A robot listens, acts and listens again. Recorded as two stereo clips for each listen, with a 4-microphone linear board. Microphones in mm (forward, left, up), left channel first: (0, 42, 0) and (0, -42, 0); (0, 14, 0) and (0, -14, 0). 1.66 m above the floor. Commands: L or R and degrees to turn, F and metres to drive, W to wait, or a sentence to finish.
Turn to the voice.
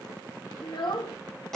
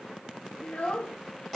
L70
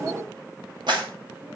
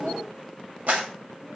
W
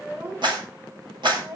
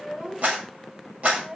R40
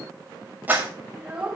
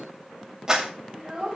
R15
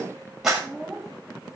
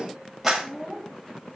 Facing the child speaking, 2 to 4 m away.